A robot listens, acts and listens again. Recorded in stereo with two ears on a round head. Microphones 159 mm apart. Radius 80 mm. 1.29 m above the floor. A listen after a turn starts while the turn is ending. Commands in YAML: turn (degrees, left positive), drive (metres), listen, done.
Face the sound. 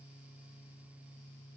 listen: true
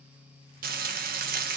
turn: -55
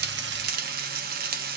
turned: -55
turn: -65
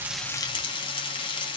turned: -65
turn: 30
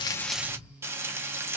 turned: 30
turn: -15
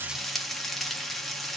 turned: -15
done: "Found it: frying, straight ahead, 1 to 2 m away."